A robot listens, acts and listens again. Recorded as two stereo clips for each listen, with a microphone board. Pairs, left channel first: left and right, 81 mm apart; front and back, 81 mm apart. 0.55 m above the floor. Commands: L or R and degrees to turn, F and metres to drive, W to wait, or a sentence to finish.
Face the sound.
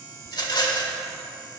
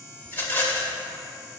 L65
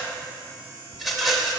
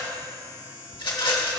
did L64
Facing the rattle.